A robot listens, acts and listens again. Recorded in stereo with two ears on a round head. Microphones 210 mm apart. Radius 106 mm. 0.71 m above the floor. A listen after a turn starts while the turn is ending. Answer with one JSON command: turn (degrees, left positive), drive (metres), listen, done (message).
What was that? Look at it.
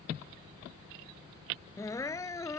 {"turn": 30}
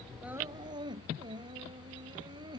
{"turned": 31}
{"turn": -20}
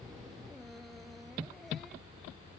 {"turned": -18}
{"listen": true}
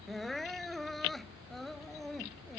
{"done": "Found it: crying, straight ahead."}